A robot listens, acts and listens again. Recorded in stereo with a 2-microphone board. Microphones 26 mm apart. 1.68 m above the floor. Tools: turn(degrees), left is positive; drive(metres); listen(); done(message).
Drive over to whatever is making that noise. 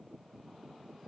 listen()
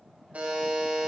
turn(degrees=-90)
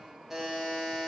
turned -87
turn(degrees=-10)
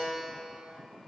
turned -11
drive(metres=1.0)
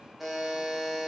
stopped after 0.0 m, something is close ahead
done("Blocked. The buzzer is further on, straight ahead.")